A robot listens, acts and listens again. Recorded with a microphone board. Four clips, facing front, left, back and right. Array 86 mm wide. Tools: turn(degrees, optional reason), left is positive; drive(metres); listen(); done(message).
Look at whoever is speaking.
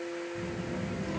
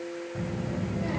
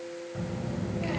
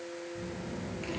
turn(degrees=135, reason="The child speaking: 135° left.")
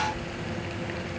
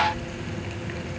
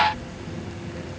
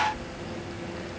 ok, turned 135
turn(degrees=-35, reason="The child speaking is now 35° right.")
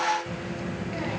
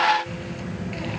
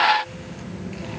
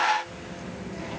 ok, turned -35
turn(degrees=10, reason="The child speaking is now 10° left.")
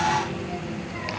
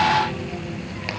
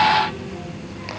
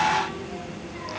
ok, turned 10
done("Found it: a child speaking, straight ahead, over 4 m away.")